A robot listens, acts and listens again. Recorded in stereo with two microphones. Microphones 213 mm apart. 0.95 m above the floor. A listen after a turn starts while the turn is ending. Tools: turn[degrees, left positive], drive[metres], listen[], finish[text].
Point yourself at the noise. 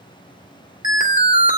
Thought: The alarm: about 40° left or 140° left.
Action: turn[40]
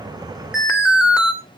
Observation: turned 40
Action: finish[Found it: an alarm, straight ahead.]